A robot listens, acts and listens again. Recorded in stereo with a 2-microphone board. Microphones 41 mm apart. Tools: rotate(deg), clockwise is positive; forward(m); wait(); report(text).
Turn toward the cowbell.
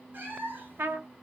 wait()
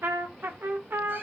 wait()
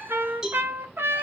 rotate(30)
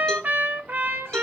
wait()
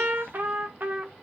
wait()
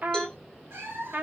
report("I heard a cowbell, but can't make it out now. It was about 20° left or 140° right.")